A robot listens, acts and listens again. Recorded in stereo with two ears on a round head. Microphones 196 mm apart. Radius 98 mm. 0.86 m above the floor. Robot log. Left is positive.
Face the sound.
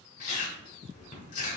note: The chewing: about 45° left or 135° left.
cmd yaw +45
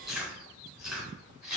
end: Found it: chewing, straight ahead.